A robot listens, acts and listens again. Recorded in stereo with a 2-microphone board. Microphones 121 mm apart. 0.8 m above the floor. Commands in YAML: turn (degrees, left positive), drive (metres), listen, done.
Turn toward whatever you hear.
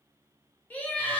turn: 30
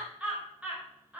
turn: -15
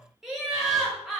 done: "Found it: laughter, straight ahead."